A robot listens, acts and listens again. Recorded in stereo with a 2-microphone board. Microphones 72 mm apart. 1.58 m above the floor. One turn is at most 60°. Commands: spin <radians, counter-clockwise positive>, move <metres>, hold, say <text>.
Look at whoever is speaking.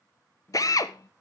spin 0.44
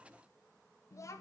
spin 1.05
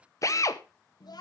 spin 1.05
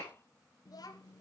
spin 1.05
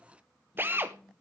say Found it: a child speaking, straight ahead, under 1 m away.